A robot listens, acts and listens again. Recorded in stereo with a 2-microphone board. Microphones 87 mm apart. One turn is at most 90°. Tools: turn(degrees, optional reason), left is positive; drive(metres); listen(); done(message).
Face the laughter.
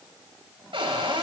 listen()
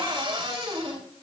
listen()
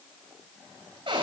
done("I can't make out laughter, only a cupboard door.")